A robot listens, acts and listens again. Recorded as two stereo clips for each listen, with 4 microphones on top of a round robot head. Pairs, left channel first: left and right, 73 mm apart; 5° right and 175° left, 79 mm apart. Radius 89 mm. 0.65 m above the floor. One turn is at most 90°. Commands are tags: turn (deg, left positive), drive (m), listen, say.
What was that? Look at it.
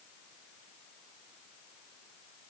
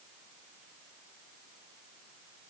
<listen/>
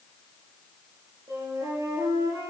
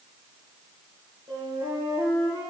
<turn deg="-90"/>
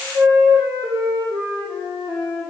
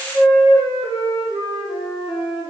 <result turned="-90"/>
<turn deg="-40"/>
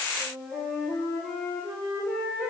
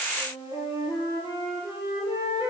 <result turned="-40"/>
<say>Facing the flute.</say>